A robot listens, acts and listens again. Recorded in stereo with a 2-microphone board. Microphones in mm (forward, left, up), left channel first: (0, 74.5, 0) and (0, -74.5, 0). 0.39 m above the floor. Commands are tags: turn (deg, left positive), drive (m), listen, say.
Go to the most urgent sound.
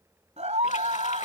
<turn deg="-50"/>
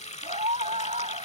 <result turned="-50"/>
<turn deg="-70"/>
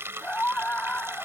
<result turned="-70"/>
<turn deg="10"/>
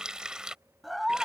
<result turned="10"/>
<drive m="1.0"/>
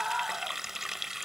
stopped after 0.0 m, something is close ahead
<say>Something is in my way. I am facing the scream but have not reached it.</say>